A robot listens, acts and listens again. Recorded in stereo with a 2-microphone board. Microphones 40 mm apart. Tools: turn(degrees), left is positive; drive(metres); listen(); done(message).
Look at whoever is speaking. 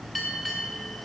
listen()
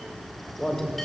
turn(degrees=30)
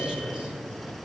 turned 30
turn(degrees=-20)
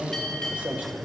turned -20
turn(degrees=-35)
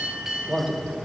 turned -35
turn(degrees=-20)
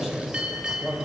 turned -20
turn(degrees=-15)
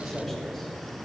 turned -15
done("Found it: a man speaking, straight ahead.")